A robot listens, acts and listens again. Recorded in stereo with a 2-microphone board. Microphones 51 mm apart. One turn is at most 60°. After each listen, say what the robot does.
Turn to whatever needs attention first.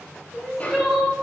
Turn 30° right.
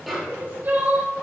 Turn 60° right.
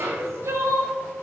Turn 60° right.
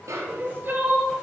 Turn 45° right.
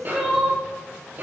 Facing the crying.